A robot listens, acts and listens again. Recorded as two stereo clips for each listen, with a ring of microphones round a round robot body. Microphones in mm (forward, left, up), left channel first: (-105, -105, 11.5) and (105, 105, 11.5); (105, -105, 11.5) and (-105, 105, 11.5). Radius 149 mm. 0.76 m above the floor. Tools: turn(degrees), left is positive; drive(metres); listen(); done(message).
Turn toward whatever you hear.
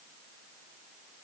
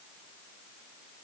listen()
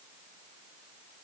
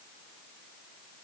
listen()
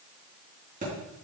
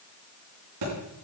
turn(degrees=110)
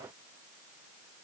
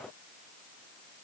done("I heard a thud from this way, but can't make it out now.")